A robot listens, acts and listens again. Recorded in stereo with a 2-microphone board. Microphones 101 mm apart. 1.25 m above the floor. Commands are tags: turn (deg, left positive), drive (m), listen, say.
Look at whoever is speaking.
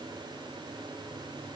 <listen/>
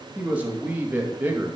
<turn deg="-20"/>
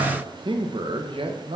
<turn deg="-120"/>
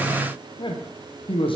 <turn deg="60"/>
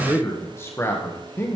<turn deg="25"/>
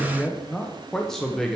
<say>Facing the man speaking.</say>